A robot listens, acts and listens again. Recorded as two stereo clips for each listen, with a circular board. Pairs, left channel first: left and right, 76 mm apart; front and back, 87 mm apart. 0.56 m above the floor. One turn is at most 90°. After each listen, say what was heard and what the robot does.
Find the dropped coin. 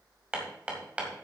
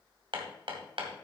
Keep listening.
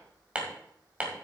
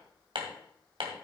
Keep listening.
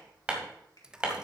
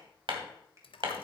The dropped coin: 10° right. Turn 10° right.
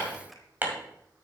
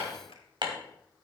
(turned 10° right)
Facing where the dropped coin came from. I can't hear it now.